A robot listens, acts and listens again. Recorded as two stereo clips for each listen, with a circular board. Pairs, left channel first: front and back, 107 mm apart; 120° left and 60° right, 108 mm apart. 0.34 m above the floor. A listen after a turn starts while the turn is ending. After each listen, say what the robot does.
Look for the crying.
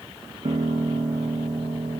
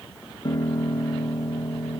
Keep listening.
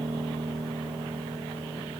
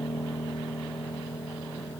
Keep listening.
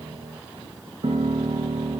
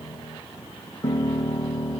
I can't make out crying, only a piano.